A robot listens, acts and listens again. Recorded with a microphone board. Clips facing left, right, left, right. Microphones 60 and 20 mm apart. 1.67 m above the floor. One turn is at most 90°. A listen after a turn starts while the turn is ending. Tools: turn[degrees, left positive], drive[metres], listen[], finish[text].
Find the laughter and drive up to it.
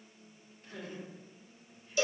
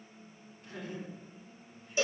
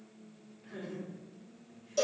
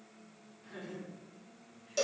Action: turn[-90]
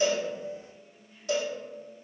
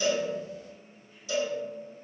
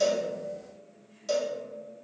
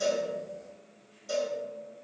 Action: listen[]
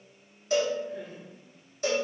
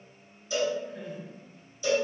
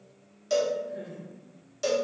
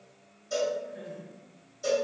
Action: drive[1.0]
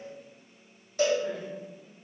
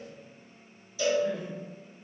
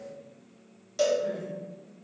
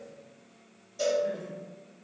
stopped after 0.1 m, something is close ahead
Action: finish[Something is in my way. I am facing the laughter but have not reached it.]